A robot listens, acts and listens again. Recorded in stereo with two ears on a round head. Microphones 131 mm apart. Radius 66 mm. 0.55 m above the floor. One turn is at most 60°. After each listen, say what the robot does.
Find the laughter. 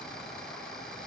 Keep listening.
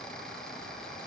Keep listening.
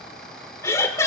Turn 20° left.
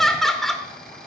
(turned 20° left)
Facing the laughter.